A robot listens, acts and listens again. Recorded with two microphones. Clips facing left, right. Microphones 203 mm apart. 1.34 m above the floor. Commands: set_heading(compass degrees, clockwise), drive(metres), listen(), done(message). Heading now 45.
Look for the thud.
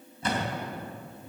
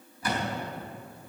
set_heading(20)
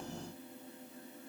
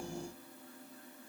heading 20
listen()
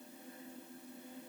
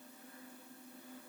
done("I heard a thud, but can't make it out now. It was about straight ahead or 130° left.")